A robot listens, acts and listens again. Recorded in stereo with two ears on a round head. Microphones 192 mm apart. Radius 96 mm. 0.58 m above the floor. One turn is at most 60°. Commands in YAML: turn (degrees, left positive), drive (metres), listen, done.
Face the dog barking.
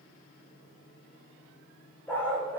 turn: 30
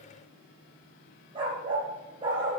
turn: -20
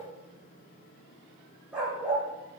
done: "Facing the dog barking, over 4 m away."